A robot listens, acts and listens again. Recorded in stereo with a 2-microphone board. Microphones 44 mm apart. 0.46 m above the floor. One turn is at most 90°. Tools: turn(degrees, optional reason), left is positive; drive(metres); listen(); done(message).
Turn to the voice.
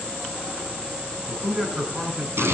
turn(degrees=-30)
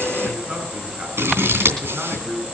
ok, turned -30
turn(degrees=-90, reason="So it is at 150° right.")
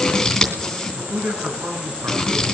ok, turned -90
turn(degrees=-60, reason="The man speaking is now 60° right.")
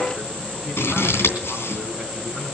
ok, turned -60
listen()
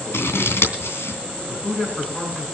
turn(degrees=10, reason="The man speaking is now 10° left.")
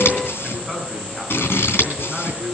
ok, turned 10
done("Facing the man speaking.")